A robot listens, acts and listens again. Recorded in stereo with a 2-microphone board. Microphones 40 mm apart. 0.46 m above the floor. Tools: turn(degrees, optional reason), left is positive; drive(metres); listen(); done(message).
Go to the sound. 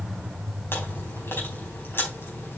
turn(degrees=65, reason="The chewing: about 65° left or 115° left.")
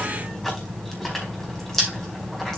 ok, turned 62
turn(degrees=10, reason="So it is at 10° left.")
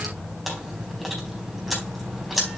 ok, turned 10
drive(metres=1.0)
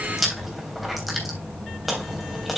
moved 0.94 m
drive(metres=1.0)
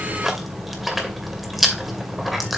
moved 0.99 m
drive(metres=1.0)
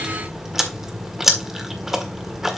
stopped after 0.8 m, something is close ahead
turn(degrees=-10, reason="The chewing is now 10° right.")
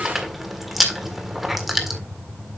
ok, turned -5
done("I am next to the chewing.")